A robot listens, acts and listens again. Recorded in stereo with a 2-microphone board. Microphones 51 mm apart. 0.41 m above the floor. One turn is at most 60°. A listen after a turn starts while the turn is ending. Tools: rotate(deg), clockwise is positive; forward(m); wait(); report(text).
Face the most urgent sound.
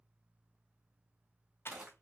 wait()
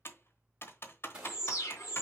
rotate(-50)
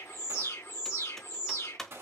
rotate(-60)
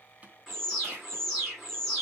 rotate(-10)
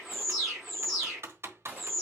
report("Facing the alarm.")